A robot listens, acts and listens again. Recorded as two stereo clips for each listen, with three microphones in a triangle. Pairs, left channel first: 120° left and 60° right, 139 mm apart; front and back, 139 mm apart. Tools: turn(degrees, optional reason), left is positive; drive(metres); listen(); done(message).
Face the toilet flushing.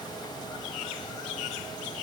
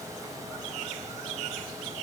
listen()
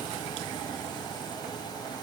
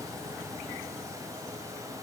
listen()
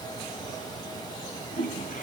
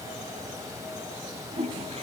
turn(degrees=135, reason="The toilet flushing: 135° left.")
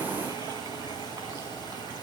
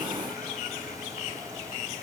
listen()
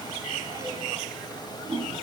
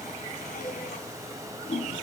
done("Facing the toilet flushing, over 4 m away.")